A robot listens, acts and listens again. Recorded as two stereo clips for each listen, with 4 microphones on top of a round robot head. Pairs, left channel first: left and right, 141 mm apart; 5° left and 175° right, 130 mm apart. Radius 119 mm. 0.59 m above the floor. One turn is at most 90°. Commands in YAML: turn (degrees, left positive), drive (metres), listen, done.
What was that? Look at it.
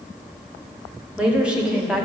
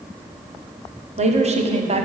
turn: -90
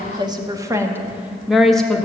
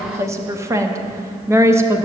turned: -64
turn: 90
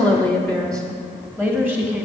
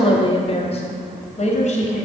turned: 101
done: "Found it: a woman speaking, straight ahead."